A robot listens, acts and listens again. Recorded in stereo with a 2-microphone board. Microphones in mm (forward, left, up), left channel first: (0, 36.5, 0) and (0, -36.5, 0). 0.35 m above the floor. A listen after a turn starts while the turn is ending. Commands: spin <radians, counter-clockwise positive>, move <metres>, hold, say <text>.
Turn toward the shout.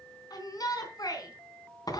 spin 1.05
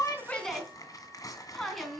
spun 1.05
say Facing the shout.